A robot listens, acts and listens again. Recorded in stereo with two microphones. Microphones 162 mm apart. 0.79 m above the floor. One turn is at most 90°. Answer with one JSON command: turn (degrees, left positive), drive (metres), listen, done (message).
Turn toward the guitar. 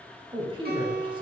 {"turn": -90}
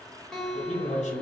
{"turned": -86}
{"done": "Facing the guitar."}